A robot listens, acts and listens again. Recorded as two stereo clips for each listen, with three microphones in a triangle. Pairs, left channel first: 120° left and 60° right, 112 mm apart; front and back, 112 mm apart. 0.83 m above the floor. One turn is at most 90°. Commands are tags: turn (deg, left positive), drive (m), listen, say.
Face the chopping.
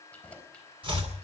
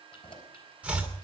<turn deg="-90"/>
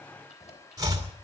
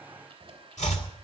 <say>Facing the chopping, 2 to 4 m away.</say>